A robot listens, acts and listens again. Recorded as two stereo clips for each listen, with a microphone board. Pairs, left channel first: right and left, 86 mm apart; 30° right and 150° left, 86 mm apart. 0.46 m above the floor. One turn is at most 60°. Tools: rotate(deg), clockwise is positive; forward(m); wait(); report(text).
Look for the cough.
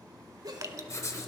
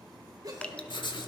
rotate(-60)
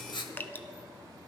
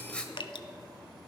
rotate(-60)
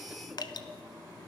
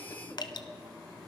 wait()
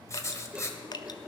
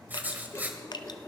report("Facing where the cough came from. I can't hear it now.")